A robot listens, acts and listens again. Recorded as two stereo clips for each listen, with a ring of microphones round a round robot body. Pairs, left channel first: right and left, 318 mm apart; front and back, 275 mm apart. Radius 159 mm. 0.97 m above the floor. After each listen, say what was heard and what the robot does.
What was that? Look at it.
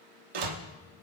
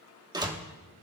The door slam: 105° left. Turn 105° left.
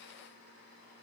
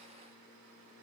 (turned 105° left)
Facing where the door slam came from. I can't hear it now.